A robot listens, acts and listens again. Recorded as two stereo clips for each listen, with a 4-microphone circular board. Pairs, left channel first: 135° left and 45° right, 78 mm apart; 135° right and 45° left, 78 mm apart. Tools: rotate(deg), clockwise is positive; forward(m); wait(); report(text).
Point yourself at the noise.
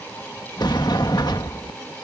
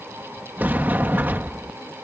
rotate(-110)
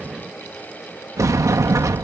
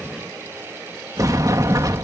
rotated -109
report("Facing the sliding door.")